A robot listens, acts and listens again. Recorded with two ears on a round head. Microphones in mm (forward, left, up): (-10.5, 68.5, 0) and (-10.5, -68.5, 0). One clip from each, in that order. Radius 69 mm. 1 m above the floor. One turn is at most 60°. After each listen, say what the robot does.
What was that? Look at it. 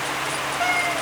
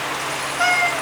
Turn 30° right.
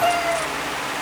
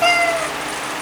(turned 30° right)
Turn 60° right.
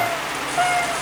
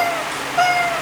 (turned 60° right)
Turn 60° right.
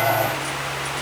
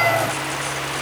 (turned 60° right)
Turn 20° right.
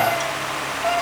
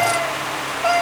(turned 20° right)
Turn 35° right.
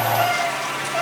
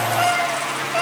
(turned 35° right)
Turn 15° right.
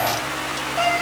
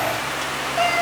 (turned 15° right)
Found it: a cat meowing, straight ahead, over 4 m away.